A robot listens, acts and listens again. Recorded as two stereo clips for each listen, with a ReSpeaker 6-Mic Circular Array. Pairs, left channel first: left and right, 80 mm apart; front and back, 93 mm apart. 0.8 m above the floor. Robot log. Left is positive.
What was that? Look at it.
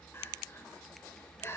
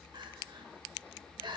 note: The crying: 145° left.
cmd yaw +145
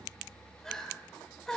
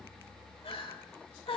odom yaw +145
end: Found it: crying, straight ahead, 1 to 2 m away.